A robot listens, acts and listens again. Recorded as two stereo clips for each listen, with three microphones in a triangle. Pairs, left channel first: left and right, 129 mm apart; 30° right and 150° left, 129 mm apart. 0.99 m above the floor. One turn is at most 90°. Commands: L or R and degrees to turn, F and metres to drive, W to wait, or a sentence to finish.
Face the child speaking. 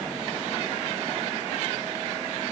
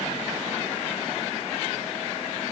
W
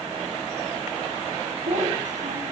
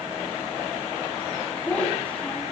R90
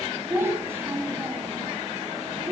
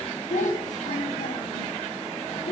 R20
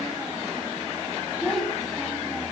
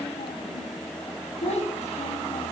Found it: a child speaking, straight ahead.